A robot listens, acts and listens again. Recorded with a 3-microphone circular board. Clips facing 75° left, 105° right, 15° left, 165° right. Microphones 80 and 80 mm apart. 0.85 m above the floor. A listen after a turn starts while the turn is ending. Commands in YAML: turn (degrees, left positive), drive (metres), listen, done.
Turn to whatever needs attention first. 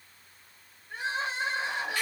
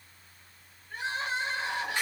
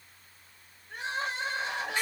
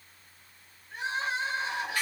turn: 10
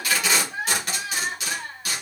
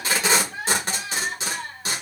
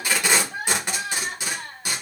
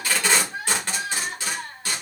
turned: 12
done: "Facing the crying, 1 to 2 m away."